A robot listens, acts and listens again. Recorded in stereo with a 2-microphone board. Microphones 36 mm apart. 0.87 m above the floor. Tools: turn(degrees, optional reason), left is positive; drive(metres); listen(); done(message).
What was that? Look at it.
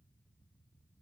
listen()
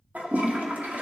turn(degrees=-45, reason="The toilet flushing: about 45° right or 135° right.")
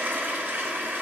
turn(degrees=-95, reason="So it is at 95° right.")
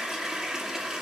turn(degrees=-15, reason="The toilet flushing is now 15° right.")
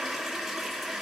done("Facing the toilet flushing, 1 to 2 m away.")